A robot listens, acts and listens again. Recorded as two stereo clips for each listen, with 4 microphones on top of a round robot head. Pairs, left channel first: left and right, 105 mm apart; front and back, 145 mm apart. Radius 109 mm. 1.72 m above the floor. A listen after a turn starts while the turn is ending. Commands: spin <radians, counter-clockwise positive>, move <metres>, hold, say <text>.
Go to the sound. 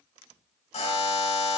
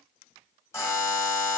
spin 1.31
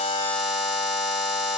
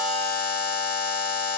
move 1.0
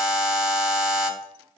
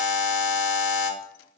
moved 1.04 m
move 1.0
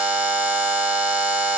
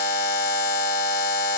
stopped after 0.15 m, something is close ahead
spin -0.17
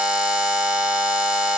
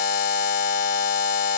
say I am next to the buzzer.